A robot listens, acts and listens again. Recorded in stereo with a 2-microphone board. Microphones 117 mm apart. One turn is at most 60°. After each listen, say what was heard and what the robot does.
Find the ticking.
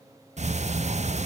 The ticking: about 75° right or 105° right. Turn 60° right.
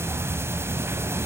So it is at 20° right. Turn 20° right.
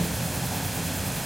Found it: ticking, straight ahead.